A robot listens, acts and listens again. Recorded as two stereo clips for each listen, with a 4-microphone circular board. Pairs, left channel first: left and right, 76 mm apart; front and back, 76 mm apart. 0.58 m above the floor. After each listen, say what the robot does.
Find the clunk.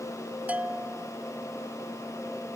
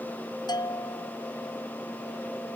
Keep listening.
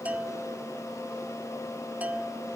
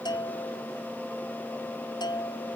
Keep listening.
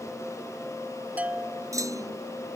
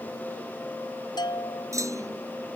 Turn 135° right.
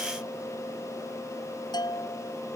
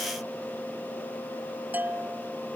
Facing where the clunk came from. I can't hear it now.